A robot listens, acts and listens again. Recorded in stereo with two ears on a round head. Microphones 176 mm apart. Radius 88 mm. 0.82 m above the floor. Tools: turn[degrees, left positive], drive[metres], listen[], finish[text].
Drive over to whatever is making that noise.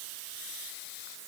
Action: listen[]
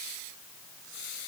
Action: listen[]
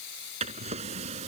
Thought: The drawer: about 35° right or 145° right.
Action: turn[-35]
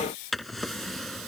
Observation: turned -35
Action: drive[1.0]
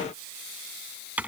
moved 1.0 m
Action: drive[1.0]
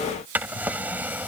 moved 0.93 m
Thought: The drawer is now 10° right.
Action: turn[-10]
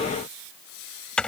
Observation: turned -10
Action: drive[1.0]
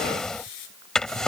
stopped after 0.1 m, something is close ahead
Action: finish[Arrived at the drawer, straight ahead.]